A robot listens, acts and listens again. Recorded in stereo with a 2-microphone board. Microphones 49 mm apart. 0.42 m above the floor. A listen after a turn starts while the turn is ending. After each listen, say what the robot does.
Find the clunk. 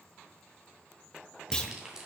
Turn 15° left.
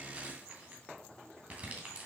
Keep listening.
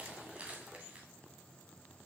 I heard a clunk, but can't make it out now. It was about straight ahead or 150° left.